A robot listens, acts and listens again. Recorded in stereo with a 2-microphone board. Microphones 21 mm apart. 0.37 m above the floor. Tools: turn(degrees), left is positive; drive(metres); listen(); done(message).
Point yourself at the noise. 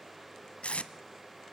turn(degrees=90)
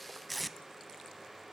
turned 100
done("Found it: tape being pulled, straight ahead.")